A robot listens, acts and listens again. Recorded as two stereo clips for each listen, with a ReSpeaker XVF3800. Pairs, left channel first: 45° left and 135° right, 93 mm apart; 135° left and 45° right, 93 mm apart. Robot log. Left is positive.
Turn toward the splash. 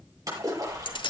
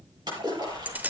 note: The splash: 85° right.
cmd yaw -85
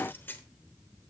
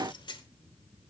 end: I heard a splash from this way, but can't make it out now.